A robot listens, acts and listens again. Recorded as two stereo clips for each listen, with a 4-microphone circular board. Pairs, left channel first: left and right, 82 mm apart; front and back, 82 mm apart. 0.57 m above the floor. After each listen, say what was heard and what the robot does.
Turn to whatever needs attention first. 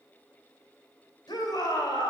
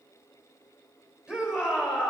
The shout: 100° left. Turn 100° left.
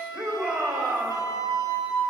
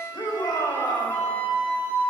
The shout is now 15° right. Turn 15° right.
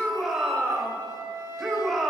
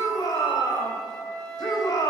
Found it: a shout, straight ahead, 2 to 4 m away.